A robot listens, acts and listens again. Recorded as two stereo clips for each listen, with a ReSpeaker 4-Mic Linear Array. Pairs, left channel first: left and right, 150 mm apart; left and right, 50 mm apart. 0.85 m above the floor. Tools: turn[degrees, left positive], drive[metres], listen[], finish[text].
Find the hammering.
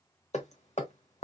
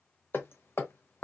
Thought: The hammering: about 50° left or 130° left.
Action: turn[50]
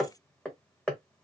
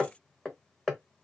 Action: finish[Facing the hammering.]